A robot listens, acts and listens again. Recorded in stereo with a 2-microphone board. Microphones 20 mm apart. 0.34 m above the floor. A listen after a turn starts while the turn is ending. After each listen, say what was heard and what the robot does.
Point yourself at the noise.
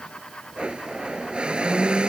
The blender: about 55° right or 125° right. Turn 55° right.
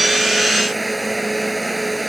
Found it: a blender, straight ahead.